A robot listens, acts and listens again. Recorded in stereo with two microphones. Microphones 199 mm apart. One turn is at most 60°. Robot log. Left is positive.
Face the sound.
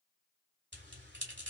note: The bell: about 65° right or 115° right.
cmd yaw -60
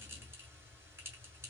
note: So it is at 10° right.
cmd yaw -10
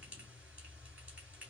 end: Facing the bell.